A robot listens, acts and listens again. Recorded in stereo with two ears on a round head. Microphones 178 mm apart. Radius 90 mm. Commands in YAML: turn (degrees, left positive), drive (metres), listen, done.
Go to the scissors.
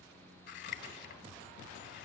turn: 55
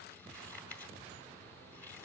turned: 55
turn: 10
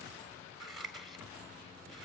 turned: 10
drive: 1.0
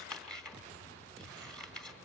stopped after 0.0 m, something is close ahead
done: "Something is in my way. I am facing the scissors but have not reached it."